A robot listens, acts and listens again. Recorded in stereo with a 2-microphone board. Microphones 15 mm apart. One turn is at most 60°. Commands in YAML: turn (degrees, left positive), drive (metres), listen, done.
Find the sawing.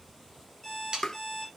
turn: -55
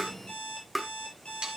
turn: -60
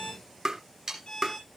turn: -40
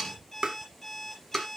turn: 20
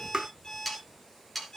done: "Facing the sawing."